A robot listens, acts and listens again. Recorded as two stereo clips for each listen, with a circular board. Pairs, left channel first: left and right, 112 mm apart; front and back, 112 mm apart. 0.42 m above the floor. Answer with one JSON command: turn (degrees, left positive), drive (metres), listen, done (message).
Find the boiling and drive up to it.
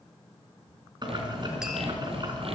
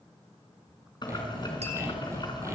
{"turn": -45}
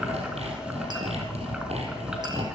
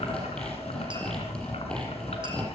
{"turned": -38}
{"turn": -10}
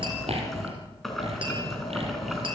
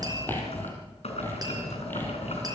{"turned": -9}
{"drive": 1.0}
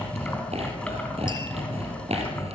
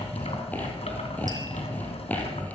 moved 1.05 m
{"turn": 10}
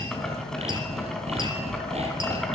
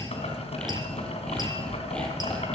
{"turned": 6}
{"drive": 1.0}
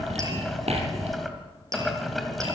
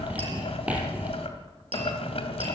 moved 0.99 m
{"drive": 1.0}
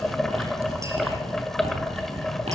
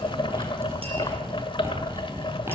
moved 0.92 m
{"drive": 1.0}
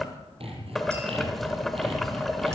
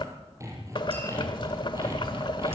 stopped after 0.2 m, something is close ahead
{"done": "Arrived at the boiling, straight ahead."}